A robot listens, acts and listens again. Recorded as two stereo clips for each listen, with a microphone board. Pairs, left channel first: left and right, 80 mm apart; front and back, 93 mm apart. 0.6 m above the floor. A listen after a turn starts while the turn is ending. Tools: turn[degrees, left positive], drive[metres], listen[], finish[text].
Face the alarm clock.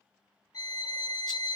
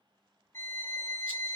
Action: listen[]
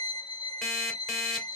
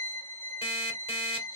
Action: finish[Found it: an alarm clock, straight ahead, 1 to 2 m away.]